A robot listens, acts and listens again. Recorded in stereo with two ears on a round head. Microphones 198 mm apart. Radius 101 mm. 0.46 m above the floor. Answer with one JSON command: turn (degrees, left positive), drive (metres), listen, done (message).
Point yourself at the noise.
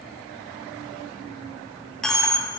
{"turn": 30}
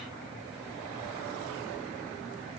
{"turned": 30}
{"listen": true}
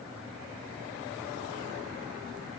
{"done": "I heard a dropped coin, but can't make it out now. It was about 25° right or 145° left."}